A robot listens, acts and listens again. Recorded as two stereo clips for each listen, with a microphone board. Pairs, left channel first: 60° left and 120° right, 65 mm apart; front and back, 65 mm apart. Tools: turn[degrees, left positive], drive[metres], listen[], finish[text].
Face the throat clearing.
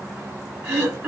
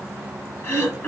Thought: The throat clearing: 60° right.
Action: turn[-60]
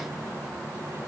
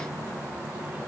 Action: listen[]
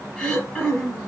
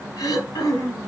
Thought: The throat clearing is now 20° right.
Action: turn[-20]
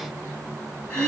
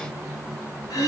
Action: finish[Facing the throat clearing.]